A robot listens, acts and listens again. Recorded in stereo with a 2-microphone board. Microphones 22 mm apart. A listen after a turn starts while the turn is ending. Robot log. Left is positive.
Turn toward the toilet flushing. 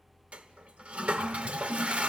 note: The toilet flushing: about 65° right or 115° right.
cmd yaw -65
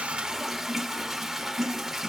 note: So it is at 10° right.
cmd yaw -10
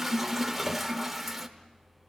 end: Found it: a toilet flushing, straight ahead, 1 to 2 m away.